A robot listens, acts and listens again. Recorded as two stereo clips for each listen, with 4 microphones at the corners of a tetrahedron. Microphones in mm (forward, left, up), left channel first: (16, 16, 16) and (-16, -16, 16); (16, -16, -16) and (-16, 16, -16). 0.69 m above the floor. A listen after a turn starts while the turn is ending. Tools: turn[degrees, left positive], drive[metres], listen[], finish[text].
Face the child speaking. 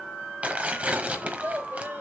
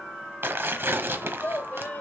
Thought: The child speaking: 95° right.
Action: turn[-95]
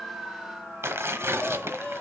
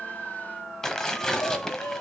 Action: listen[]
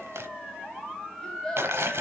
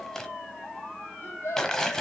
Thought: The child speaking is now 30° right.
Action: turn[-30]
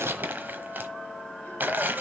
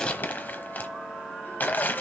Action: listen[]
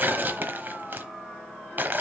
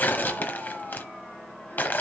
Action: listen[]
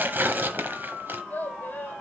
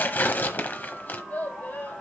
Action: finish[Facing the child speaking, 1 to 2 m away.]